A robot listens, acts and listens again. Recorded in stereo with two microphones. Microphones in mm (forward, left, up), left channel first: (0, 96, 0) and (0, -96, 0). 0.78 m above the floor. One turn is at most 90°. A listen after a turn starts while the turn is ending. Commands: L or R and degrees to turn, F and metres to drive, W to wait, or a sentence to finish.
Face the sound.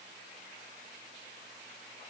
W
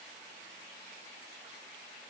W
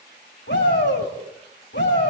L70
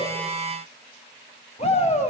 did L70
L35
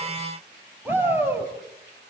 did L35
R10
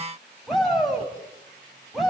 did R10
Facing the shout, over 4 m away.